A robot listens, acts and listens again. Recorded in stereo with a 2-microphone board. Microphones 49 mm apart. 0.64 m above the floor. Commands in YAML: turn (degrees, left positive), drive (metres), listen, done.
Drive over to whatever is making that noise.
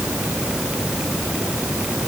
listen: true
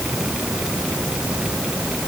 listen: true
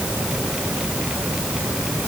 done: "I can't make out anything."